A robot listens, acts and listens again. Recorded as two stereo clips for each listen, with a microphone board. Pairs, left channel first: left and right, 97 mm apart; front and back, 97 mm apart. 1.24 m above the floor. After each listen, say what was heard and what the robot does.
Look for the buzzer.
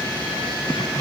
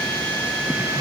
Keep listening.
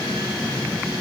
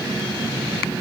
Keep listening.
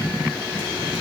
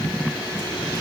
I can't make out a buzzer to turn to.